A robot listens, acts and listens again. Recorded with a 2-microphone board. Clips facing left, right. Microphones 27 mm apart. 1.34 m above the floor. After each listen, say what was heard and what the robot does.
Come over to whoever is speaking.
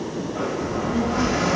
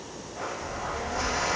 The child speaking: about 20° left or 160° left. Turn 20° left.
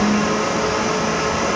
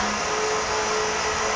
So it is at 140° left. Turn 140° left.
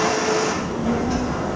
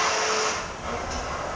The child speaking is now 25° left. Turn 25° left.
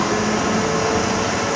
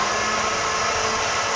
Drive 1.0 m forward.
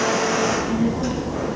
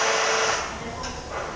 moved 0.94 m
Drive 1.0 m forward.
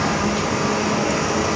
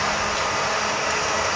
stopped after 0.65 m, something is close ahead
The child speaking is now 10° right. Turn 10° right.
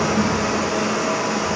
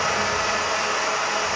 Arrived at the child speaking, straight ahead.